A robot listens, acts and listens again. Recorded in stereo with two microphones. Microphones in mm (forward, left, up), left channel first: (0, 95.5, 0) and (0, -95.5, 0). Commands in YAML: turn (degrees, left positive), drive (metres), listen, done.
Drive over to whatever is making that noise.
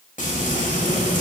turn: 45
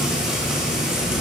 drive: 1.0
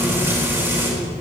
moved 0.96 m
turn: -10
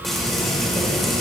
drive: 1.0
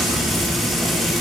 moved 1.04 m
drive: 1.0
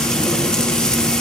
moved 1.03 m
drive: 1.0
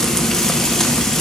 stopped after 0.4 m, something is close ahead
done: "Arrived at the frying, straight ahead."